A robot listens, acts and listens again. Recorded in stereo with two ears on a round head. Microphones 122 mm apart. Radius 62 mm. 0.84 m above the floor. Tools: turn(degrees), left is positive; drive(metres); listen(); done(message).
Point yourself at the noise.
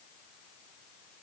listen()
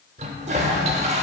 turn(degrees=-50)
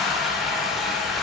done("Found it: a toilet flushing, straight ahead, 1 to 2 m away.")